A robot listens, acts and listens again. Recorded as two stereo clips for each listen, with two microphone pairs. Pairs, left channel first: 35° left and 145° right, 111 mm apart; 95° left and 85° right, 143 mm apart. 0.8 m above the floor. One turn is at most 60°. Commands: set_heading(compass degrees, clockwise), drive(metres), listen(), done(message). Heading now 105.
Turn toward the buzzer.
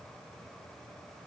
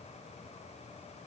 listen()
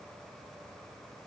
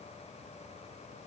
listen()
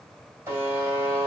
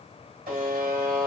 set_heading(165)
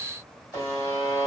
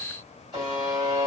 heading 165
set_heading(185)
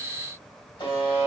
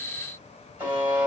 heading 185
done("Found it: a buzzer, straight ahead, 2 to 4 m away.")